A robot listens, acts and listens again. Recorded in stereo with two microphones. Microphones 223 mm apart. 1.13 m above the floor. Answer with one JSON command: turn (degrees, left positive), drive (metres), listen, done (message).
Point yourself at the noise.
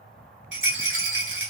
{"turn": -55}
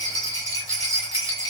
{"turn": -15}
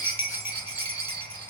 {"done": "Facing the rattle, 1 to 2 m away."}